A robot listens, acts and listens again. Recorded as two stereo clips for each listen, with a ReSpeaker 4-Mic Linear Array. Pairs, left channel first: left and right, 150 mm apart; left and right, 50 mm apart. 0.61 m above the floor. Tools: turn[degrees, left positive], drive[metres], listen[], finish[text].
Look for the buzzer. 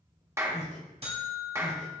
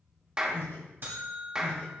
Thought: The buzzer: about 45° right or 135° right.
Action: turn[-45]
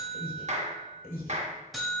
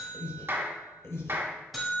Action: finish[Facing the buzzer, 2 to 4 m away.]